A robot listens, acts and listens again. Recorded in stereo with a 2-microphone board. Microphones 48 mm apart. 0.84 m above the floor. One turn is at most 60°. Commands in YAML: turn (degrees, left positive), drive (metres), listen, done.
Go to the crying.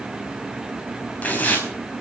listen: true
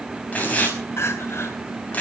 turn: 60
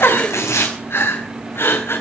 turn: 55
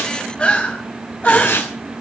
turn: 25
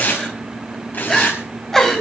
turn: 10
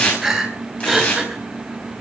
turn: -10
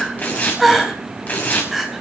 drive: 1.0
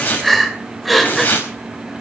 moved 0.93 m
drive: 1.0
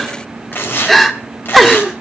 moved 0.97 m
drive: 1.0
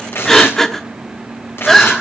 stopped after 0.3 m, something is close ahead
done: "Arrived at the crying, straight ahead."